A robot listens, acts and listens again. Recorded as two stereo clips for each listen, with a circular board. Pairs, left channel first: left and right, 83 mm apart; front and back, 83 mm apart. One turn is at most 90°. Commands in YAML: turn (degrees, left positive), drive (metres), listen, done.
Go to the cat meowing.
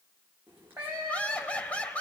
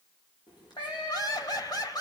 turn: -25
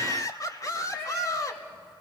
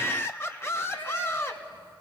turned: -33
drive: 1.0
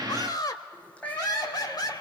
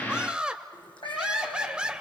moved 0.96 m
turn: 15
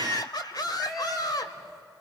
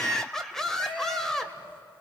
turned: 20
drive: 1.0
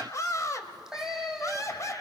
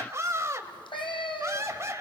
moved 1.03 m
drive: 1.0
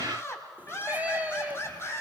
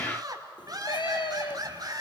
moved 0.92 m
turn: -20
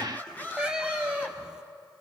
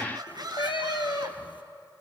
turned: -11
turn: -10
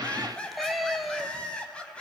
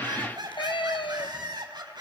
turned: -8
drive: 1.0
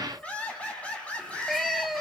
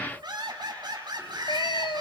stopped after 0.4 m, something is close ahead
done: "I am next to the cat meowing."